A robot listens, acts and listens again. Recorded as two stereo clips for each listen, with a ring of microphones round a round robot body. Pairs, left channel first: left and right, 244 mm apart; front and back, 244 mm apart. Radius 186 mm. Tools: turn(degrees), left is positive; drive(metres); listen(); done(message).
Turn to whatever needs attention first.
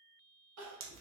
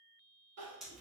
turn(degrees=-130)
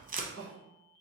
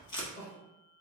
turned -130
turn(degrees=-65)
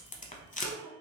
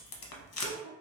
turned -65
turn(degrees=-10)
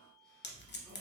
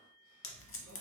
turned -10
listen()
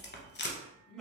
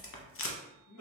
done("Found it: crying, straight ahead, 1 to 2 m away.")